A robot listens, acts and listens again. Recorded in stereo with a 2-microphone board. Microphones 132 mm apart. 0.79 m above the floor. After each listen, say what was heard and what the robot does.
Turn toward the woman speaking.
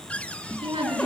The woman speaking: about 45° right or 135° right. Turn 45° right.
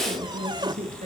So it is at 95° right. Turn 95° right.
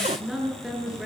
Found it: a woman speaking, straight ahead, over 4 m away.